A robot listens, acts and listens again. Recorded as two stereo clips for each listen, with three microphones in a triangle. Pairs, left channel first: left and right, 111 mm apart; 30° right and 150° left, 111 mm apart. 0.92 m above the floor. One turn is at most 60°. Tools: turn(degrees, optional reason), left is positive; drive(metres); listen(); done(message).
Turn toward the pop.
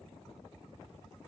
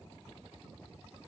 listen()
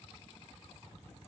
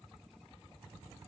listen()
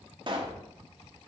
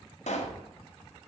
turn(degrees=-40, reason="The pop: 40° right.")
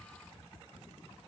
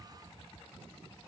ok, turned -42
done("I heard a pop from this way, but can't make it out now.")